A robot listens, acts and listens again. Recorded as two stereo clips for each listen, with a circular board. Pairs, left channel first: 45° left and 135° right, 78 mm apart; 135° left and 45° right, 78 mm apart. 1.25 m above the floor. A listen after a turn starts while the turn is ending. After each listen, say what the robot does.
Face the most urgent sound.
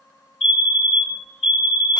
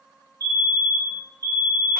Turn 35° right.
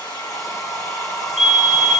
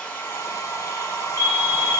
Turn 10° right.
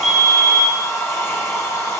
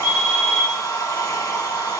Found it: a fire alarm, straight ahead, 2 to 4 m away.